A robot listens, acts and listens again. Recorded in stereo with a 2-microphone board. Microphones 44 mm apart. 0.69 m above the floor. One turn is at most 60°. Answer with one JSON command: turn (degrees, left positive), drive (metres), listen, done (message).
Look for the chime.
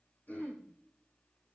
{"listen": true}
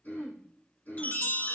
{"turn": 40}
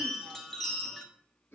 {"done": "Found it: a chime, straight ahead, 1 to 2 m away."}